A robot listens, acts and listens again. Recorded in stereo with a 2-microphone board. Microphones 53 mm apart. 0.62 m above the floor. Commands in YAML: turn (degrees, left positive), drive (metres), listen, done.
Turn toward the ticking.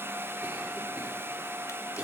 listen: true
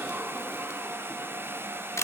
listen: true
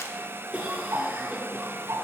turn: -90
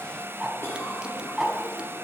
turn: -10
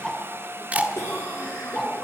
done: "Found it: ticking, straight ahead."